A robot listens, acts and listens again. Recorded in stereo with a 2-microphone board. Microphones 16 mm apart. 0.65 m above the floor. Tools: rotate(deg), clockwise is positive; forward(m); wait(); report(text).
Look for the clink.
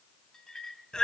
rotate(-60)
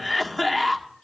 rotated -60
wait()
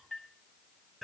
rotate(-65)
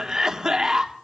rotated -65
wait()
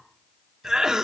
wait()
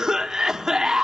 report("Facing where the clink came from. I can't hear it now.")